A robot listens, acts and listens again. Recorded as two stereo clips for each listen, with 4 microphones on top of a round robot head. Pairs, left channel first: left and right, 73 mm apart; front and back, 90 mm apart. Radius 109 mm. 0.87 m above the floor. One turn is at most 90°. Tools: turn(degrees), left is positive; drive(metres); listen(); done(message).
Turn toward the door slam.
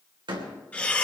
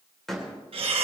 turn(degrees=-90)
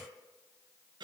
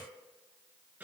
done("I heard a door slam from this way, but can't make it out now.")